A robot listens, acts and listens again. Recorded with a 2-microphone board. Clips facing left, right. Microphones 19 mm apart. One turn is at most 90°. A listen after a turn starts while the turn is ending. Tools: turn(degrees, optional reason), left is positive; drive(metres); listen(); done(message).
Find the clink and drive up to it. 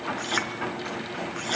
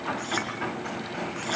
turn(degrees=15, reason="The clink: about 15° left or 165° left.")
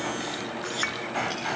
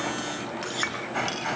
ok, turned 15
drive(metres=1.0)
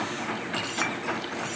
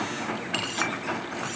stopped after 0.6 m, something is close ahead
listen()
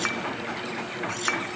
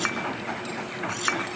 done("Something is in my way. I am facing the clink but have not reached it.")